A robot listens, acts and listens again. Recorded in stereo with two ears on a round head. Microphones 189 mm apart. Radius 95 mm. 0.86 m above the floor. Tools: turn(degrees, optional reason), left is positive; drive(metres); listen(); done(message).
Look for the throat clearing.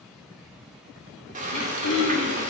turn(degrees=90)
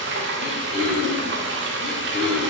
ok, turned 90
done("Found it: throat clearing, straight ahead.")